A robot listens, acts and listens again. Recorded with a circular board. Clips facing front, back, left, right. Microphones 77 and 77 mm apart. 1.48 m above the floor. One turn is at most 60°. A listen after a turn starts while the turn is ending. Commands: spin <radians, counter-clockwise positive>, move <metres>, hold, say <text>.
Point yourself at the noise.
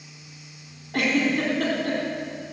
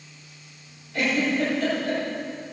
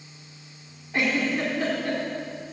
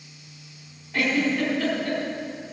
spin 0.26
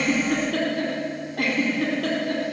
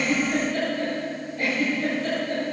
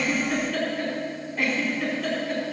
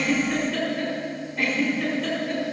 say Found it: a giggle, straight ahead.